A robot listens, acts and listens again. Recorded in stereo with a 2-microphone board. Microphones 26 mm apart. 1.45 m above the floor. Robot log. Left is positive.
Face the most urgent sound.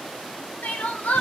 cmd yaw +90
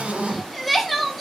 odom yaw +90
end: Facing the crying.